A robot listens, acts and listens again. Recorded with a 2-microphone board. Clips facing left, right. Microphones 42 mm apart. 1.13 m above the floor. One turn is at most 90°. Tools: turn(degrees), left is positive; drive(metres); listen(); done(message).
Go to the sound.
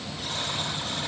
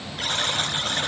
turn(degrees=-60)
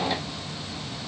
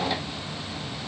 listen()
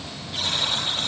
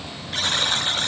turn(degrees=-55)
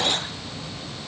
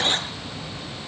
listen()
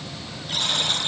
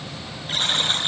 turn(degrees=-30)
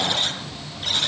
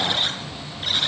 turn(degrees=-10)
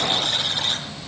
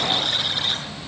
drive(metres=1.0)
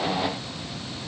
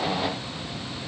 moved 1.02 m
listen()
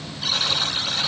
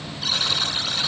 drive(metres=1.0)
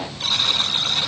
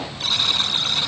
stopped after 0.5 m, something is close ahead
done("Something is in my way. I am facing the buzzer but have not reached it.")